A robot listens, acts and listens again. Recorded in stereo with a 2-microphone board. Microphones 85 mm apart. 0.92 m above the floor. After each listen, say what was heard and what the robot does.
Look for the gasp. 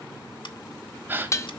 The gasp: about 25° right or 155° right. Turn 25° right.
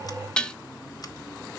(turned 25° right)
Keep listening.
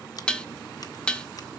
I heard a gasp, but can't make it out now. It was about straight ahead or 130° right.